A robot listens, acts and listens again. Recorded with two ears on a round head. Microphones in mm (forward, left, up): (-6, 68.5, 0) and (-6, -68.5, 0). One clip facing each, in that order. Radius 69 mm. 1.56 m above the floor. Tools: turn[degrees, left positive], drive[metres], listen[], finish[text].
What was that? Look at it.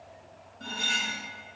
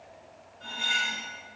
Thought: The cutlery clinking: about 50° left or 130° left.
Action: turn[50]
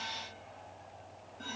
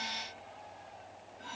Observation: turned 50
Thought: So it is at 65° left.
Action: turn[65]
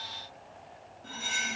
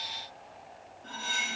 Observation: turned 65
Thought: The cutlery clinking is now 15° left.
Action: turn[15]
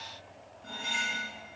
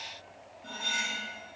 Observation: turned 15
Action: finish[Found it: cutlery clinking, straight ahead, 1 to 2 m away.]